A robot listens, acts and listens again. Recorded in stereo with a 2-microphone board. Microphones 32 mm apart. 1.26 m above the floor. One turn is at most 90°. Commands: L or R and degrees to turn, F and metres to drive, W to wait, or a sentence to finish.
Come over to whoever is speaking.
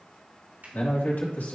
L75
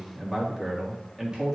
F1.0
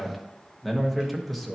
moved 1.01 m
F1.0
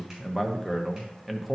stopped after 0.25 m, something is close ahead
Arrived at the man speaking, straight ahead.